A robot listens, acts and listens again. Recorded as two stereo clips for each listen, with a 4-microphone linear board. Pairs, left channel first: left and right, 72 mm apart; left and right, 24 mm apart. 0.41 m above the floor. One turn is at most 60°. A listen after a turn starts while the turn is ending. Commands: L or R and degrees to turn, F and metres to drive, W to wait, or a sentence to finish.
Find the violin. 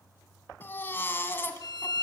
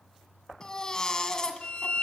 L60
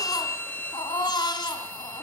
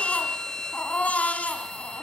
L30
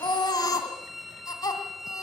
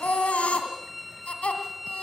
Found it: a violin, straight ahead.